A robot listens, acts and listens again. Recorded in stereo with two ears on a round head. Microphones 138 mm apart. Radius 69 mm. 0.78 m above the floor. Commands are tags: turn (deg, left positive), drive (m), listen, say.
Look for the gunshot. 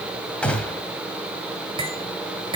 <turn deg="30"/>
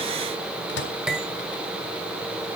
<listen/>
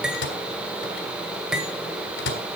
<say>I heard a gunshot, but can't make it out now. It was about 20° right or 140° left.</say>